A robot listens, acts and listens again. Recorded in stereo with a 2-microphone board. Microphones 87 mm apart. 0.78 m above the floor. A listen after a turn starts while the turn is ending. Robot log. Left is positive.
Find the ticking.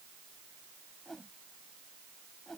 cmd idle
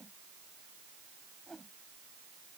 cmd idle
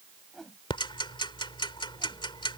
note: The ticking: about 70° left or 110° left.
cmd yaw +70
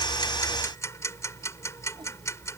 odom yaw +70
note: So it is at 35° left.
cmd yaw +35
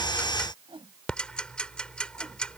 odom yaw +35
note: The ticking is now 10° left.
cmd yaw +10
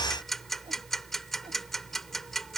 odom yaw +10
end: Facing the ticking.